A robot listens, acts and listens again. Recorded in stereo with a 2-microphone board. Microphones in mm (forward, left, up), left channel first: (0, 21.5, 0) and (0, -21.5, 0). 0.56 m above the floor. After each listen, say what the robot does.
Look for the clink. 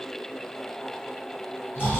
Keep listening.
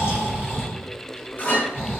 Turn 45° left.
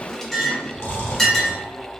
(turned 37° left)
Turn 10° left.
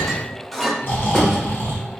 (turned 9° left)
Found it: a clink, straight ahead.